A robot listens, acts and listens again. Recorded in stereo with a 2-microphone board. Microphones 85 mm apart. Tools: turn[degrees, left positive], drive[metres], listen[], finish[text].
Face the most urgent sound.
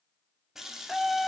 Action: turn[30]
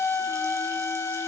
Thought: So it is at 150° left.
Action: turn[150]
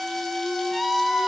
Action: finish[Found it: a scream, straight ahead, under 1 m away.]